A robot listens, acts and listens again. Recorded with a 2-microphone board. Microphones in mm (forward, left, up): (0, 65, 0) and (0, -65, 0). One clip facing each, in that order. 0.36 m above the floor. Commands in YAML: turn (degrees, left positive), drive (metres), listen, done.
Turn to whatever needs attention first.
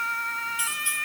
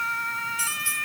listen: true
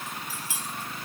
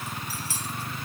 listen: true
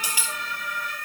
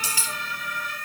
done: "I can't make out anything urgent, only cutlery clinking."